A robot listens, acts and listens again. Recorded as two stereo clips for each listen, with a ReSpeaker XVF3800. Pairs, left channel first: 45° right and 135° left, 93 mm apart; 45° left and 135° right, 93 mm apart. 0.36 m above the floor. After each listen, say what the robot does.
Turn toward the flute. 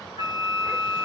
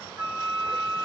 Turn 150° left.
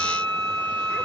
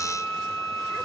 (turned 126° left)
Turn 30° left.
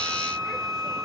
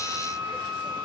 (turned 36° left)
Turn 10° right.
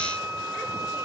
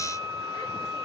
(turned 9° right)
Found it: a flute, straight ahead, 1 to 2 m away.